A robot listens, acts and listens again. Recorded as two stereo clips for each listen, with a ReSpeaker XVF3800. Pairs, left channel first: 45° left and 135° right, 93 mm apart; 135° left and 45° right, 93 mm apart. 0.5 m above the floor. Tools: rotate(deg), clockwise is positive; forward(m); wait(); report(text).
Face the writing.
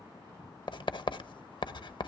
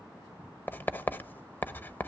rotate(-70)
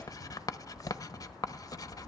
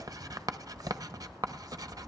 report("Found it: writing, straight ahead.")